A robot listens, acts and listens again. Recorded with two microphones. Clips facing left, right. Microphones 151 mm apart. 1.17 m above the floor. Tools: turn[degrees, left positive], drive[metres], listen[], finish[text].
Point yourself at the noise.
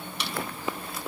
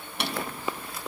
Thought: The drawer: about 55° right or 125° right.
Action: turn[-55]
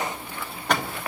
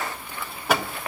Action: finish[Found it: a drawer, straight ahead.]